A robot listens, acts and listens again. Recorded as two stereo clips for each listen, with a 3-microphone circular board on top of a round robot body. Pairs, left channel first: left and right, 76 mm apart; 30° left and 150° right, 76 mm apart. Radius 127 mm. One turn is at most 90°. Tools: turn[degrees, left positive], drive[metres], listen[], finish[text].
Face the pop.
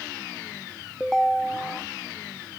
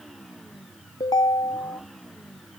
Action: listen[]
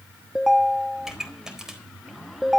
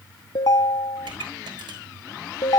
Thought: The pop: 175° right.
Action: turn[-90]
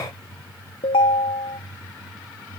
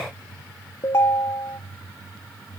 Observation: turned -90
Thought: Nothing new. It was at 85° right.
Action: turn[-85]
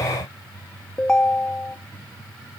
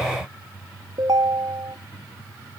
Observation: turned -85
Action: finish[Facing where the pop came from. I can't hear it now.]